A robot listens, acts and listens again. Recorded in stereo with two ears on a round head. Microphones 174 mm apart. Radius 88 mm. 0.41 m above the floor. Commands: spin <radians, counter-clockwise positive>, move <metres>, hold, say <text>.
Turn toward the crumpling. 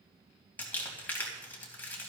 spin 0.52
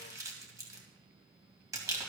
spin -0.35
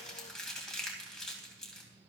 say Facing the crumpling, 2 to 4 m away.